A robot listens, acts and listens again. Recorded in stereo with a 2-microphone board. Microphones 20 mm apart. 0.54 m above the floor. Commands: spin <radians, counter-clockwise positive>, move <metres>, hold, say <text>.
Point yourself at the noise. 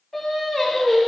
spin 0.26
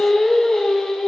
spin 0.70
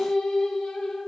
spin 1.66
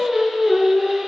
spin -0.44
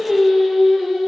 spin -0.35
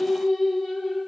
say Found it: singing, straight ahead, 2 to 4 m away.